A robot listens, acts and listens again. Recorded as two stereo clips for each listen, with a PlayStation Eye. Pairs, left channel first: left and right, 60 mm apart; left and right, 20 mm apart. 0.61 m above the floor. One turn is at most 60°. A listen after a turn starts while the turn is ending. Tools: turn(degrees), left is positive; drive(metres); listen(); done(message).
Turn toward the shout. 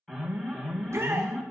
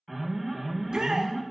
turn(degrees=-50)
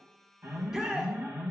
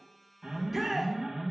turn(degrees=-10)
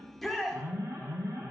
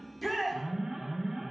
done("Found it: a shout, straight ahead, 1 to 2 m away.")